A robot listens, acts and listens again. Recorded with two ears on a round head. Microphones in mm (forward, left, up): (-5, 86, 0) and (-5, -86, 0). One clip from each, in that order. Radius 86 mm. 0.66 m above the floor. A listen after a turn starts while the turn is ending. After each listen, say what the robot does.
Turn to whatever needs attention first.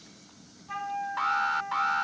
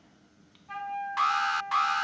Turn 60° right.
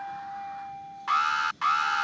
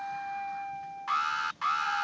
Facing the alarm.